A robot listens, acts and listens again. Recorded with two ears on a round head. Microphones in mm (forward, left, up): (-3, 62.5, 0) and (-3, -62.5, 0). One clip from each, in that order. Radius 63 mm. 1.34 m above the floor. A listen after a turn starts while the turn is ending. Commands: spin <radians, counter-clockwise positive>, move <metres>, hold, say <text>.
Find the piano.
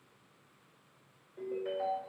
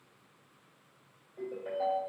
hold
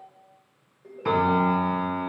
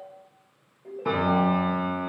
spin 0.87
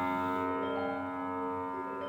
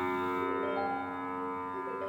spin 1.40
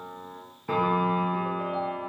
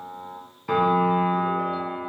spin -0.44
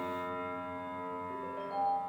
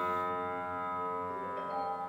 say Facing the piano, 1 to 2 m away.